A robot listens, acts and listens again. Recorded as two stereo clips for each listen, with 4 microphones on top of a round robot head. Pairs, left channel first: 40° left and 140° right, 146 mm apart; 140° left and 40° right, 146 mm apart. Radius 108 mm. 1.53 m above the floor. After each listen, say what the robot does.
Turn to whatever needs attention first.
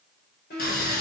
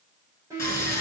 Turn 30° left.
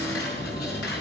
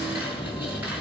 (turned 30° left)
Keep listening.
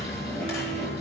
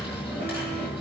Keep listening.
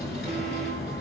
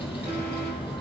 I heard an alarm from this way, but can't make it out now.